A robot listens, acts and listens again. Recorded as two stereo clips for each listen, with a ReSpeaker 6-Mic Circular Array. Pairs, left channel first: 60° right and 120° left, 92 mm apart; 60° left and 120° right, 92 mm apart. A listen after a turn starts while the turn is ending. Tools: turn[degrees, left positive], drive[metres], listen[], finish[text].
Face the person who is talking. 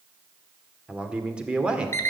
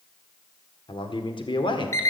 Thought: The man speaking: 40° left.
Action: turn[40]
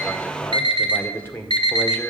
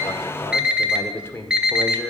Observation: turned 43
Action: finish[Facing the man speaking.]